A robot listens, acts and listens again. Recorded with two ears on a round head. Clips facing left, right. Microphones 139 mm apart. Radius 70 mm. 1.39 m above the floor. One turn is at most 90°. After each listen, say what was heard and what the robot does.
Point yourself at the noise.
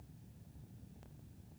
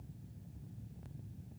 Keep listening.
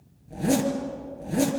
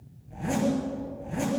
The zipper: about 45° left or 135° left. Turn 45° left.
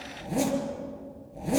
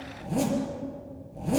Found it: a zipper, straight ahead.